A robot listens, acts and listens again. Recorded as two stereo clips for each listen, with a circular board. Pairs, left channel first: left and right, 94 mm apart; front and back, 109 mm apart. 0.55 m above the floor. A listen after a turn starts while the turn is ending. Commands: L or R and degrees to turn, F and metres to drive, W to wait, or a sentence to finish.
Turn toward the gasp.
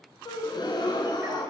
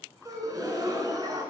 L125
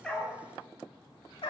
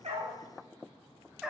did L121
Facing where the gasp came from. I can't hear it now.